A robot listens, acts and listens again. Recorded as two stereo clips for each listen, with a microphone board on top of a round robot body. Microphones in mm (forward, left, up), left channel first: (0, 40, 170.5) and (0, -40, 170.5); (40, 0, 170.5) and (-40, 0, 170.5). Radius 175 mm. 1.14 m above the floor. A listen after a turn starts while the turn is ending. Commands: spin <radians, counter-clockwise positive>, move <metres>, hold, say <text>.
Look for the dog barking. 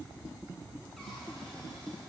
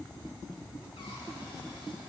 hold
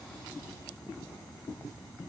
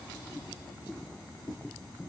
hold
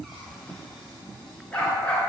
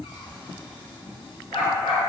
spin 0.35
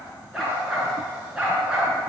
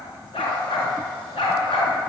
spin -0.17
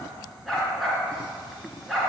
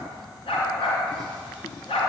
say Facing the dog barking.